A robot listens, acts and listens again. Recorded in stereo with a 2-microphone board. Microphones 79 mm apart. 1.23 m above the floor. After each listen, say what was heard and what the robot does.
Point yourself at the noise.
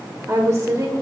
The woman speaking: about 45° right or 135° right. Turn 45° right.
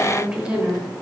So it is at 15° right. Turn 15° right.
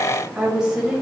The woman speaking is now 10° right. Turn 10° right.
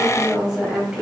The woman speaking is now 10° right. Turn 10° right.
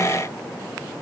Keep listening.
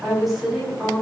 Found it: a woman speaking, straight ahead, 2 to 4 m away.